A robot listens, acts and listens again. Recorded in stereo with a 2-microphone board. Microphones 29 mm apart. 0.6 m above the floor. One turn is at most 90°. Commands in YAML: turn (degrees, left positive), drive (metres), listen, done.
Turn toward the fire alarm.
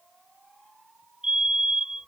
turn: -25
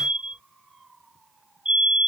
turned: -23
turn: -90
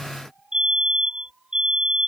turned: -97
turn: -35
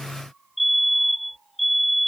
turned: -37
done: "Found it: a fire alarm, straight ahead."